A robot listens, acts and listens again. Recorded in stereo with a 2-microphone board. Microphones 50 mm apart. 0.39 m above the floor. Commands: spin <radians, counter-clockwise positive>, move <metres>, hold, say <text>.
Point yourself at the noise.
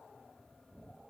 hold
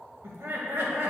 spin -0.96
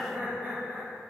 spin -0.87
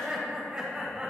spin -0.35
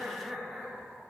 spin -0.17
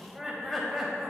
say Facing the laughter, 1 to 2 m away.